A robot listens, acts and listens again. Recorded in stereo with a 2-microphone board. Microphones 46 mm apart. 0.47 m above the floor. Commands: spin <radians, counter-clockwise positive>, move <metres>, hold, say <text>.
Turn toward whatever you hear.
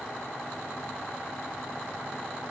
hold
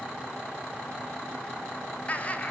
spin 0.61
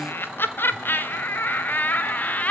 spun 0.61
spin 0.61
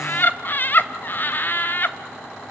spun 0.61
spin 0.79
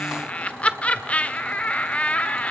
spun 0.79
spin 0.52
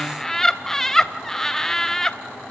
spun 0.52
spin 0.17
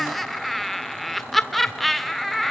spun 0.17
say Facing the laughter, 1 to 2 m away.